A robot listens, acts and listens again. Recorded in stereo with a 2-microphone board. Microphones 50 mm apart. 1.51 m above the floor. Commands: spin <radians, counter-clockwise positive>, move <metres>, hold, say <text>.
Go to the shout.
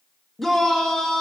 spin 0.52
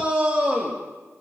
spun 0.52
spin -0.35
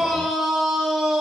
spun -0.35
move 1.0
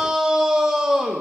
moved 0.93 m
spin -0.17
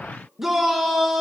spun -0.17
move 1.0
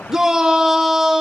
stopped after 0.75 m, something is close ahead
spin -0.17
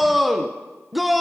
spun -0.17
say I am next to the shout.